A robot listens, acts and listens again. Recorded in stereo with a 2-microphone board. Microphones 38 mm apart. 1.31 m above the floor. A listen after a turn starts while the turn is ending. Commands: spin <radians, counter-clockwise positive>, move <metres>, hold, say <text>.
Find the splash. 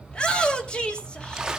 spin -0.26
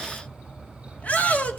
hold
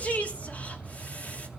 say I heard a splash, but can't make it out now. It was about straight ahead or 150° right.